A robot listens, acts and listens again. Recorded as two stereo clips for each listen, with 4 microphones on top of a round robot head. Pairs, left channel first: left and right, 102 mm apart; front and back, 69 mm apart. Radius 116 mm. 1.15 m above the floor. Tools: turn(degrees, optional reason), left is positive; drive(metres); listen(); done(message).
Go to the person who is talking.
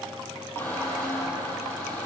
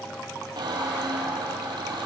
listen()
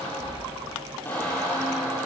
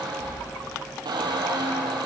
listen()
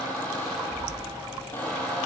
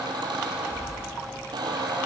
done("I can't make out anyone speaking, only a squeak.")